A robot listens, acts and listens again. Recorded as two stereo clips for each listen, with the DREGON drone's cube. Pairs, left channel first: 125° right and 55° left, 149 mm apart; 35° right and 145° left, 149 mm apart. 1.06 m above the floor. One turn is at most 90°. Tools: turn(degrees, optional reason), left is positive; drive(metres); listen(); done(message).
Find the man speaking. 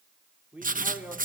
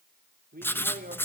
turn(degrees=90, reason="The man speaking: 140° left.")
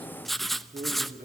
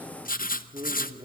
turn(degrees=75, reason="The man speaking is now 75° left.")
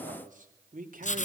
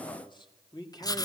turn(degrees=30, reason="The man speaking is now 30° left.")
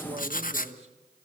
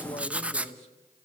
turn(degrees=10, reason="The man speaking is now 10° left.")
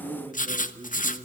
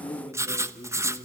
done("Facing the man speaking, 2 to 4 m away.")